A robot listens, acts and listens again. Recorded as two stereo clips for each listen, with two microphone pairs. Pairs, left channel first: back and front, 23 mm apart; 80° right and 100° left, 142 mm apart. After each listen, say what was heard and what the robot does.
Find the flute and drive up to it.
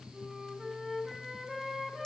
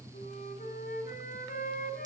The flute: 85° right. Turn 85° right.
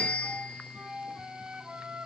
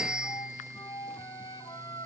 The flute is now 20° right. Turn 20° right.
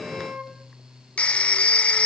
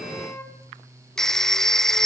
The flute is now 10° right. Turn 10° right.
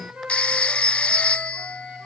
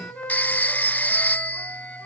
Drive 1.0 m forward.
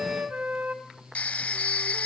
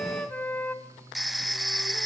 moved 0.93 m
Drive 1.0 m forward.
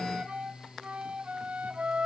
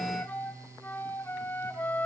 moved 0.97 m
Drive 1.0 m forward.
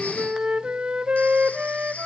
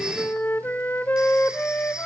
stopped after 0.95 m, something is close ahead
Arrived at the flute, straight ahead.